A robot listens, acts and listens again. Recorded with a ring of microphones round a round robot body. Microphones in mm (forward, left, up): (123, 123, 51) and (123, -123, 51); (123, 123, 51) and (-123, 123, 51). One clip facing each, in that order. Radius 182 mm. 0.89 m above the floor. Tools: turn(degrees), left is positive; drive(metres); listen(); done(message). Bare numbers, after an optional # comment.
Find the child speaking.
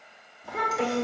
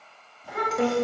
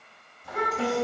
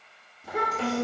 # The child speaking: 170° right.
turn(-170)
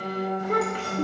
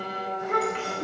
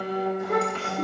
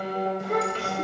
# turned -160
# The child speaking is now 45° left.
turn(45)
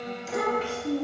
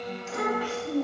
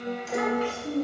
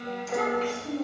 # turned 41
# The child speaking is now 25° left.
turn(25)
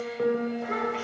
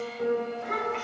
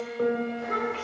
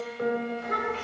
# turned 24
# The child speaking is now 10° left.
turn(10)
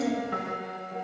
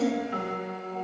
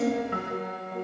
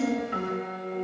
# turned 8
done("Facing the child speaking.")